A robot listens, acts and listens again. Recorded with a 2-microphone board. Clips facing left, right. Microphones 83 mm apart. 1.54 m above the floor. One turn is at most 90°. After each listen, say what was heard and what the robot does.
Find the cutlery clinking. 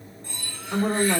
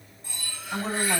Turn 30° right.
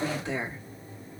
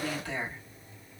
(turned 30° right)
Keep listening.
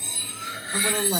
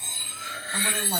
So it is at 145° right. Turn 90° right.
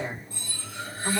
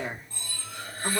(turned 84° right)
The cutlery clinking is now 60° right. Turn 60° right.
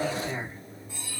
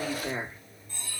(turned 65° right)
Found it: cutlery clinking, straight ahead.